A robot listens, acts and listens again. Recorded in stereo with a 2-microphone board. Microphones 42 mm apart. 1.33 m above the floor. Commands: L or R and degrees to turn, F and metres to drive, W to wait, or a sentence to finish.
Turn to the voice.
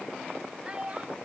R20
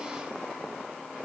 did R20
W
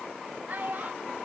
R135
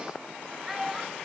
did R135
R10
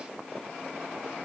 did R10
W
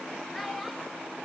W
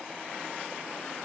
Facing where the child speaking came from. I can't hear it now.